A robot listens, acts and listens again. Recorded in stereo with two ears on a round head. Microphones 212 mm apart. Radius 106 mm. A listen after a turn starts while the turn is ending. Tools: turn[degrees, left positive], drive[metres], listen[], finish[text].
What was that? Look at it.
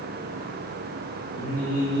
Thought: The singing: about 60° left or 120° left.
Action: turn[60]
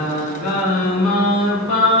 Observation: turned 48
Thought: So it is at 45° left.
Action: turn[45]
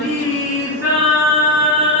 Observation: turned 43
Thought: The singing is now 25° right.
Action: turn[-25]
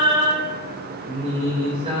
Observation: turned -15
Thought: The singing is now 25° right.
Action: turn[-25]
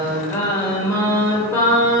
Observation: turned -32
Thought: The singing is now 10° left.
Action: turn[10]
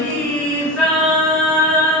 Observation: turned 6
Action: finish[Found it: singing, straight ahead, 1 to 2 m away.]